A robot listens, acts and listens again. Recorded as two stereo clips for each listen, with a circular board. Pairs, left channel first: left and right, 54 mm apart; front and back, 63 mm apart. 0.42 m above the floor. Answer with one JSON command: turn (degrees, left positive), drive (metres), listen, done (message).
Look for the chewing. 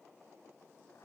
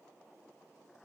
{"listen": true}
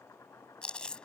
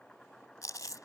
{"turn": 20}
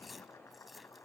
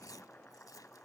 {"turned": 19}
{"listen": true}
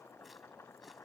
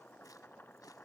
{"listen": true}
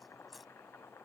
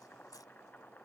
{"done": "Found it: chewing, straight ahead."}